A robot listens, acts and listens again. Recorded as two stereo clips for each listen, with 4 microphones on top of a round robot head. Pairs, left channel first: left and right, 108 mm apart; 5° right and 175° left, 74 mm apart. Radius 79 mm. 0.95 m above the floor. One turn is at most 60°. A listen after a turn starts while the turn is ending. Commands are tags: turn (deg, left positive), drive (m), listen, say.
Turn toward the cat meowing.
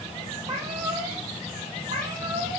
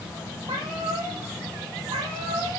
<turn deg="-60"/>
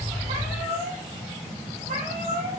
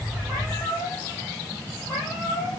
<turn deg="-60"/>
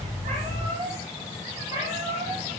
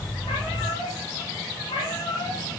<turn deg="-20"/>
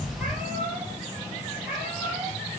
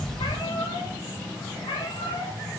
<turn deg="-10"/>
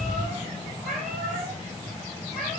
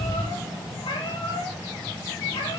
<say>Facing the cat meowing, 2 to 4 m away.</say>